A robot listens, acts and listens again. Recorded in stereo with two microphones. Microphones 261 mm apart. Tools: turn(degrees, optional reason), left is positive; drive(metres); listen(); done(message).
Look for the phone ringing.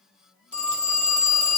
turn(degrees=90)
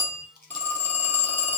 turn(degrees=10, reason="So it is at 10° left.")
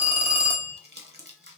done("Facing the phone ringing, 1 to 2 m away.")